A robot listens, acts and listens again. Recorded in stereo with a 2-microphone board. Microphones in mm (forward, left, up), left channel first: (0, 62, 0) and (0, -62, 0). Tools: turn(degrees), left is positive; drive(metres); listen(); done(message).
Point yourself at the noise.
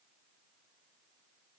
listen()
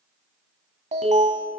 turn(degrees=-70)
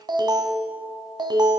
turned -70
turn(degrees=-35)
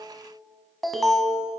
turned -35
done("Found it: an alarm, straight ahead.")